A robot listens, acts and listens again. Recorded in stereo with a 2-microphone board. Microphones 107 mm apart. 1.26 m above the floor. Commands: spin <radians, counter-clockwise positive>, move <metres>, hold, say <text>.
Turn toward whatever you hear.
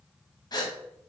spin 0.61
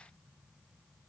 hold
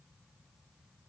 say I heard a gasp, but can't make it out now. It was about straight ahead or 110° left.